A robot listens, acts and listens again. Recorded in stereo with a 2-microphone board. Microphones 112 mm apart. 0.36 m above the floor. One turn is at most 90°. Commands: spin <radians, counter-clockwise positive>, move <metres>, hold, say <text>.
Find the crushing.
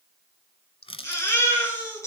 spin 1.05
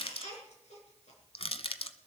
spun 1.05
spin 1.05
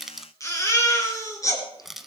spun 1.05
say Found it: crushing, straight ahead, 1 to 2 m away.